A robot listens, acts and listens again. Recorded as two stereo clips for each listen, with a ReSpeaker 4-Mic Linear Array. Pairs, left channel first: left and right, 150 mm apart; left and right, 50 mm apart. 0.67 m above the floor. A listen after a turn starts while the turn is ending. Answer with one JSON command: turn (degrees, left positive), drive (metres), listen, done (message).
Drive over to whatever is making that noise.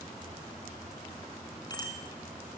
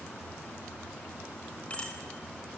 {"turn": 25}
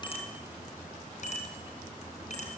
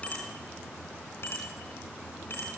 {"turn": 130}
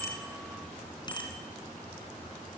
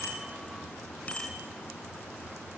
{"turn": 30}
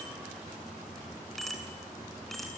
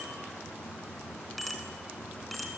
{"drive": 1.0}
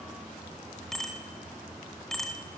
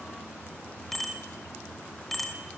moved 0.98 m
{"drive": 1.0}
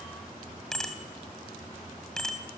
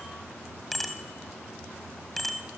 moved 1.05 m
{"drive": 1.0}
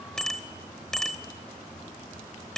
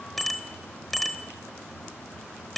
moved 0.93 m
{"drive": 1.0}
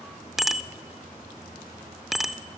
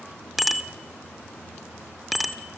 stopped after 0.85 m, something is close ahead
{"done": "Arrived at the bicycle bell, straight ahead."}